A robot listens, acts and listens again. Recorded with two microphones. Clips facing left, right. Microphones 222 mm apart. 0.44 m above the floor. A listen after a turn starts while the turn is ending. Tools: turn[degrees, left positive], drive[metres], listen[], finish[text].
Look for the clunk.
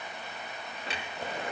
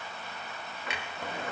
Thought: The clunk: about 35° left or 145° left.
Action: turn[35]
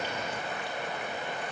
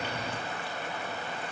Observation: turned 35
Action: listen[]
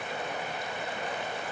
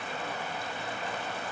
Action: finish[I heard a clunk, but can't make it out now. It was about straight ahead or 110° left.]